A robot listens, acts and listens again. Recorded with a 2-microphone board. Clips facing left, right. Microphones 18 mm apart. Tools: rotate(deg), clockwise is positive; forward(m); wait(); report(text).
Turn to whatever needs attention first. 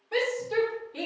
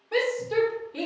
rotate(30)
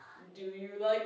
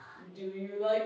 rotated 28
rotate(-20)
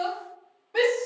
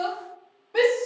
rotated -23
report("Facing the shout.")